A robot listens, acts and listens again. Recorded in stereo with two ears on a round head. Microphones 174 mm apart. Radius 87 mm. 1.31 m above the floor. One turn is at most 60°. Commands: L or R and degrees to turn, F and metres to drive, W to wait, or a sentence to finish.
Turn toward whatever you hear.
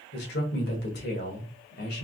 L55
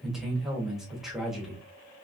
Facing the man speaking, 1 to 2 m away.